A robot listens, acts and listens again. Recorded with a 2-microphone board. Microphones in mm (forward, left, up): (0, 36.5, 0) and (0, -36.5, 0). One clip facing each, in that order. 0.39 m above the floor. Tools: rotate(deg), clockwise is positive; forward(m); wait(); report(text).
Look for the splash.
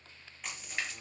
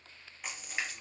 rotate(30)
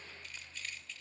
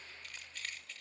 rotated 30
wait()
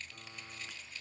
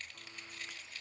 report("I heard a splash, but can't make it out now. It was about 20° left or 140° right.")